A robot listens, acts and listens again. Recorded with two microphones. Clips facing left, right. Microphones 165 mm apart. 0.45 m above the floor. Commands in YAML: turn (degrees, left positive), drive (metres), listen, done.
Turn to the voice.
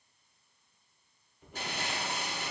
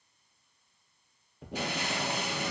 listen: true
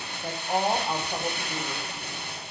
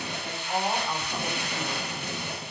turn: 35
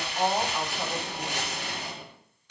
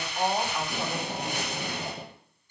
done: "Found it: a woman speaking, straight ahead, 2 to 4 m away."